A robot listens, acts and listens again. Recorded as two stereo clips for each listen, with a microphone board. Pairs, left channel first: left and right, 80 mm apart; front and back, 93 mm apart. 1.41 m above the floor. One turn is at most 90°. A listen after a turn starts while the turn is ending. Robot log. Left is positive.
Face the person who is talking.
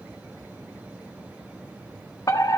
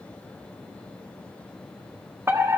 cmd idle
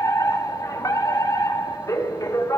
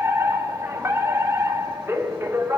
cmd idle
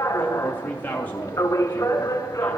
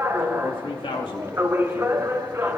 note: The man speaking: 20° left.
cmd yaw +20
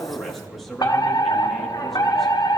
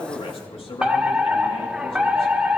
end: Found it: a man speaking, straight ahead.